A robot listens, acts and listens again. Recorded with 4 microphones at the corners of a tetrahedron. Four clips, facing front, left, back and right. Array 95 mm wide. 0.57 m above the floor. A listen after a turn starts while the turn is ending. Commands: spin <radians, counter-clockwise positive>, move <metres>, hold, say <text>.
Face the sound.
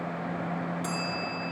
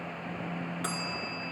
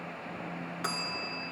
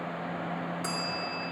spin 2.62
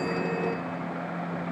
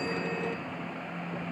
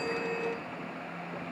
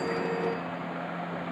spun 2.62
hold
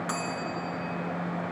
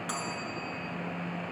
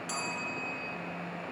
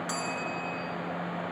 spin 0.17
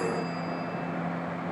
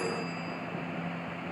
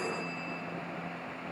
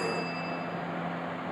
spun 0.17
hold
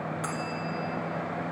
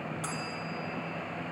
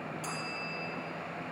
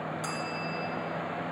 say Facing the bell, 1 to 2 m away.